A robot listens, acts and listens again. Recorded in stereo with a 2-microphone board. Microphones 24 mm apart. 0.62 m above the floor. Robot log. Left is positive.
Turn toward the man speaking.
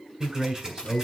note: The man speaking: about 30° right or 150° right.
cmd yaw -30
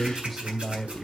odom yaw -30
end: Facing the man speaking.